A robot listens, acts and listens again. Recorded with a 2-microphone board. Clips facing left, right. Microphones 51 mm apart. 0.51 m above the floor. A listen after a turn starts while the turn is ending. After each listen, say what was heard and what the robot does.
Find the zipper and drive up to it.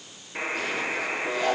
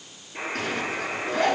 The zipper: about 70° right or 110° right. Turn 70° right.
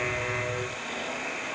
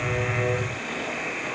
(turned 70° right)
Keep listening.
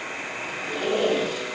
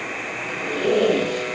Drive 1.0 m forward.
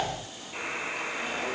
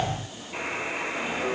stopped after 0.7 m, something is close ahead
Keep listening.
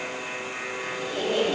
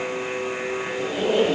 The zipper is now 10° right. Turn 10° right.
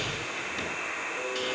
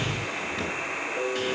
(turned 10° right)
Blocked. The zipper is further on, straight ahead.